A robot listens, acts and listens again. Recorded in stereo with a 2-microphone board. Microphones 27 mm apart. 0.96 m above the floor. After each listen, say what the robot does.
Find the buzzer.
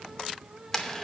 Keep listening.
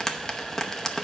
Keep listening.
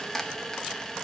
I can't make out a buzzer to turn to.